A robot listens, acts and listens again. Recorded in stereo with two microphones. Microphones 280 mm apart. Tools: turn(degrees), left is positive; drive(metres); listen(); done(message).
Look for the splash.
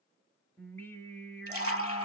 turn(degrees=-55)
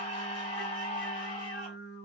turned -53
listen()
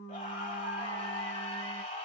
done("I heard a splash, but can't make it out now. It was about straight ahead or 75° right.")